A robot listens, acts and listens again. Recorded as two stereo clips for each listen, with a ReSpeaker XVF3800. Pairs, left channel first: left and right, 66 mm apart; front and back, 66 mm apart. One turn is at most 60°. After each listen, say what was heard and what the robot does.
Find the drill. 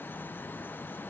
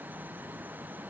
Keep listening.
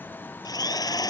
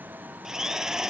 The drill: 100° left. Turn 60° left.
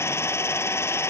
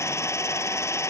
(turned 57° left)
The drill is now 40° left. Turn 40° left.
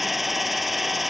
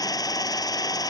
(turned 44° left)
Facing the drill.